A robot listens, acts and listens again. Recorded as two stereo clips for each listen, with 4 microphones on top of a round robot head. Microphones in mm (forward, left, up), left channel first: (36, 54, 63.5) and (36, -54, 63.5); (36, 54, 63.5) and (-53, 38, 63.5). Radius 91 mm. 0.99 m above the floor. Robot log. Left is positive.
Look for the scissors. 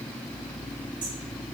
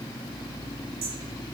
cmd idle
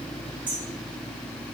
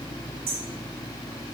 cmd idle
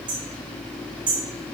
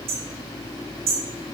end: I can't make out scissors, only hammering.